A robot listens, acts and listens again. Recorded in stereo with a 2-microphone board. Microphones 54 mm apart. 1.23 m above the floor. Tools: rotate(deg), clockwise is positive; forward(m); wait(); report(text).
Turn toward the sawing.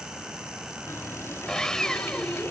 rotate(-30)
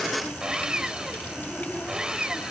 rotate(15)
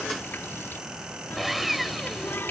report("Found it: sawing, straight ahead.")